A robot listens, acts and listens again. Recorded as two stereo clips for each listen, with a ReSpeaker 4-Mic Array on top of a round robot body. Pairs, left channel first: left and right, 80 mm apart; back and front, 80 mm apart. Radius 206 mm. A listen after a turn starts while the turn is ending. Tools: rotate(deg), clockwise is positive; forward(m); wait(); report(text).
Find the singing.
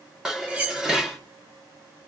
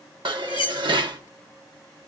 wait()
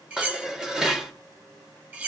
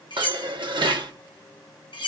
wait()
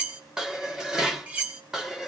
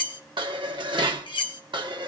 report("I can't make out singing, only cutlery clinking and dishes clattering.")